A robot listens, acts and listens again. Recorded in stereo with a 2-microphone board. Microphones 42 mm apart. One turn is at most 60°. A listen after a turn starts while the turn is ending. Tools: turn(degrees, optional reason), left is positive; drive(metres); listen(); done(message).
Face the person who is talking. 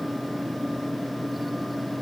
listen()
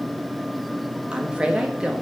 turn(degrees=-20, reason="The woman speaking: about 20° right or 160° right.")
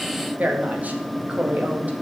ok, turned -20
turn(degrees=-60, reason="So it is at 140° right.")
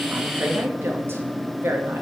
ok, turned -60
turn(degrees=-60, reason="The woman speaking is now 90° right.")
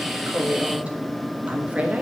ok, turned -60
turn(degrees=-40, reason="The woman speaking is now 40° right.")
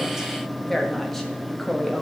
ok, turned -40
done("Facing the woman speaking.")